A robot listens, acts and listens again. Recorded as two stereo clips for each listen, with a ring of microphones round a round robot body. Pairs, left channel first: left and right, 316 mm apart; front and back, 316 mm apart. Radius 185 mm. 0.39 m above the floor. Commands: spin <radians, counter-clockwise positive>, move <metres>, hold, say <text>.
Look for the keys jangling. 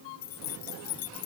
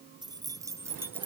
spin 1.66
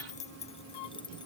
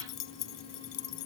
spin 0.17
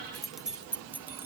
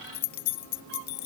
say Found it: keys jangling, straight ahead.